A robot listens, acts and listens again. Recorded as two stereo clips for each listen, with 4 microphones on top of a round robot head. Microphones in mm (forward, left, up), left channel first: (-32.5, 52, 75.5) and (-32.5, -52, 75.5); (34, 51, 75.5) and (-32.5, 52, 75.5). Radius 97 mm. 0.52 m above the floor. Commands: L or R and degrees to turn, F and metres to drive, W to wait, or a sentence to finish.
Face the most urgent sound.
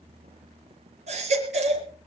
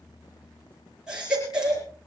R100
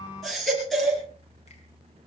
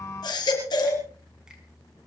Facing the baby crying.